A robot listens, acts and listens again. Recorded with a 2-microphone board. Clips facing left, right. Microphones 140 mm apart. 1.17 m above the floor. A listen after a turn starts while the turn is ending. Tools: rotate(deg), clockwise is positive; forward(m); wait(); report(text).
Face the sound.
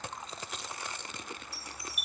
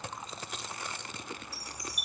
rotate(40)
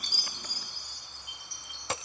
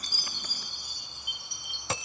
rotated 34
rotate(100)
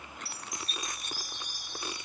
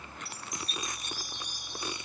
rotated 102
report("Found it: a chime, straight ahead.")